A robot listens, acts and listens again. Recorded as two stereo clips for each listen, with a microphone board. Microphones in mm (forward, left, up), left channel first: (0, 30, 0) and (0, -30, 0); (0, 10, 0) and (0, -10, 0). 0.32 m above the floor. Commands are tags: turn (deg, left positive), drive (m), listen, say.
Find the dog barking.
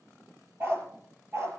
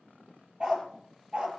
<turn deg="-45"/>
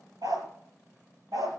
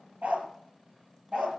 <turn deg="-70"/>
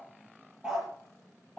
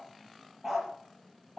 <say>Found it: a dog barking, straight ahead.</say>